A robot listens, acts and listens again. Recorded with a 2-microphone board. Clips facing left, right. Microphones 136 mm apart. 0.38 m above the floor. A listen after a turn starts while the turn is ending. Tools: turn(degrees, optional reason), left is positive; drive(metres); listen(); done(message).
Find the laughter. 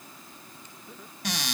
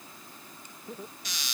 turn(degrees=-35, reason="The laughter: about 35° right or 145° right.")
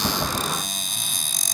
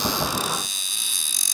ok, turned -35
listen()
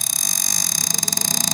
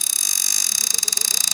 listen()
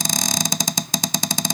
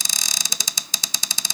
done("I heard laughter, but can't make it out now. It was about straight ahead or 110° right.")